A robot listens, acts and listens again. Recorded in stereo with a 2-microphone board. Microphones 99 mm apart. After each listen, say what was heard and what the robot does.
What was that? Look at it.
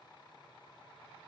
Keep listening.
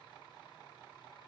Keep listening.
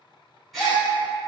Turn 30° left.
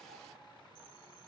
Keep listening.
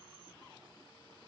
I heard a gasp, but can't make it out now. It was about 30° right or 150° left.